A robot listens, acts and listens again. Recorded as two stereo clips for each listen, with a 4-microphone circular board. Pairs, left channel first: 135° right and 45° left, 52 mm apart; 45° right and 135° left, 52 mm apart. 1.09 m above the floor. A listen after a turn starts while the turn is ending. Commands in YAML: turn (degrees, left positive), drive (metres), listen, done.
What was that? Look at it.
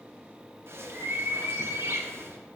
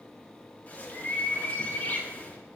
turn: 10
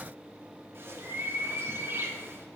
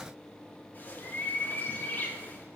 done: "Facing the bird, under 1 m away."